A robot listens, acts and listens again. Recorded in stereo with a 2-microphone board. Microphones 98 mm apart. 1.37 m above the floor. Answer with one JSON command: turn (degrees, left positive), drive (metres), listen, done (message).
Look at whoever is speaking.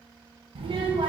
{"turn": -65}
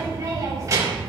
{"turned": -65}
{"turn": -35}
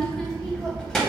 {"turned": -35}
{"done": "Facing the child speaking."}